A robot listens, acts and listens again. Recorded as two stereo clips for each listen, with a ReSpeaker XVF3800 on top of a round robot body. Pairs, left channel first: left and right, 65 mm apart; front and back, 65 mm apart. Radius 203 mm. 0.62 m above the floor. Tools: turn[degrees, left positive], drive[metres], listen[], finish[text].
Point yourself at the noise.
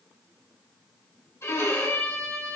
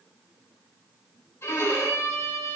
Thought: The violin: 50° left.
Action: turn[50]
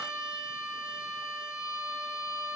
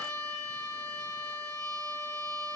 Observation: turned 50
Action: finish[Found it: a violin, straight ahead.]